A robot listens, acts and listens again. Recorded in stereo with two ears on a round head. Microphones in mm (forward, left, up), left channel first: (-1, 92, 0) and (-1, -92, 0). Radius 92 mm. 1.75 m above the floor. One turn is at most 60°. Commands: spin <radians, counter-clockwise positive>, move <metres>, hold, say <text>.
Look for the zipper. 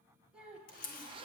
spin -0.44
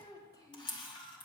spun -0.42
hold
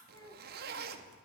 spin -1.05
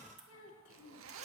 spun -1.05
spin -1.05
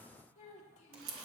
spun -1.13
hold
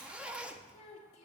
say Found it: a zipper, straight ahead, under 1 m away.